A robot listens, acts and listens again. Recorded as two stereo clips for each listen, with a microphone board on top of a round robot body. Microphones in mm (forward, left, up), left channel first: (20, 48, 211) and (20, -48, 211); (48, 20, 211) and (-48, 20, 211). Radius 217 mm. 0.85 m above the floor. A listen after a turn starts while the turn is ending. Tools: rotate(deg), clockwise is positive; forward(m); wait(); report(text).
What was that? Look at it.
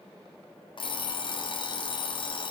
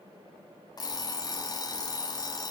rotate(-50)
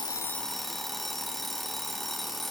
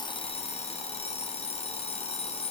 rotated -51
report("Found it: an alarm clock, straight ahead.")